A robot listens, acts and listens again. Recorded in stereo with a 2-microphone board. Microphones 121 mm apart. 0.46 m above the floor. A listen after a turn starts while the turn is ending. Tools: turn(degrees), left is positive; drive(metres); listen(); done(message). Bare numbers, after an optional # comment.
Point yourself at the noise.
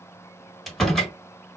turn(30)
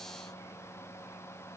listen()
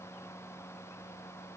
done("I heard a door slam, but can't make it out now. It was about 25° right or 145° left.")